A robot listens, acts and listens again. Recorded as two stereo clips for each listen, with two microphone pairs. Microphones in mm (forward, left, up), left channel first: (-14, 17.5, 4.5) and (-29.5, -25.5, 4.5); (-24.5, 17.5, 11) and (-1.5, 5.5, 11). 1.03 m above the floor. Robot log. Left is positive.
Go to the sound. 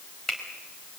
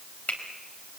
note: The finger snap: 145° left.
cmd yaw +145
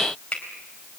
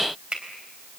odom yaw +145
cmd fwd 1.0
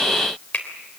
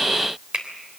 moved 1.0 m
note: The finger snap is now 10° left.
cmd yaw +10
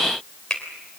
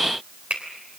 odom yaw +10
cmd fwd 1.0
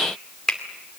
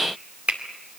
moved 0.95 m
cmd fwd 1.0
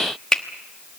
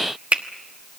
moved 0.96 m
cmd fwd 1.0
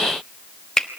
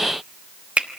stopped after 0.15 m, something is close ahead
end: Arrived at the finger snap, straight ahead.